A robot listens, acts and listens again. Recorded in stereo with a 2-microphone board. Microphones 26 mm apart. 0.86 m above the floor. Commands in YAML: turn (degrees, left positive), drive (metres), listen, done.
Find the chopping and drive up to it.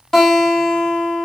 listen: true
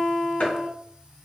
turn: 55
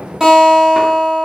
listen: true
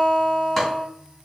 listen: true
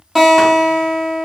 done: "I heard chopping, but can't make it out now. It was about straight ahead or 70° left. I did not reach it."